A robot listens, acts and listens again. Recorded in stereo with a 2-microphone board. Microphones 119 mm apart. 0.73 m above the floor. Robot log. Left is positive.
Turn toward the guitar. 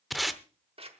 cmd idle
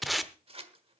cmd idle
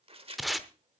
end: I can't make out a guitar, only tape being pulled and scissors.